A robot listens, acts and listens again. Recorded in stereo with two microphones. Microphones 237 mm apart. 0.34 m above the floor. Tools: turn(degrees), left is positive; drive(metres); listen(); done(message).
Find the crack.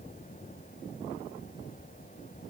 listen()
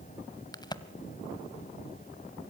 turn(degrees=15)
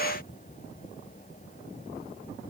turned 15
listen()
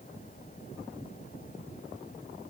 done("I heard a crack, but can't make it out now. It was about straight ahead or 150° left.")